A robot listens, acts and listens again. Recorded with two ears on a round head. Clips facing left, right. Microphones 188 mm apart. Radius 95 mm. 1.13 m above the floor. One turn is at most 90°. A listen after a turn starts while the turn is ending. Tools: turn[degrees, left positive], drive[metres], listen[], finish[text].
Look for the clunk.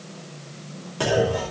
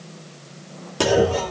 Thought: The clunk: about 50° right or 130° right.
Action: turn[-50]
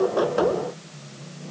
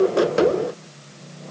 Action: listen[]
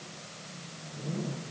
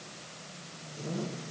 Action: finish[I heard a clunk, but can't make it out now. It was about straight ahead or 80° right.]